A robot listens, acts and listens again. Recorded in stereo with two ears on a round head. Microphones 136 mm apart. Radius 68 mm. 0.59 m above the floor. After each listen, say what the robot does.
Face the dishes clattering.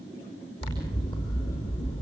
Keep listening.
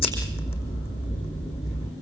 Keep listening.
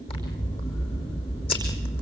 I can't make out dishes clattering to turn to.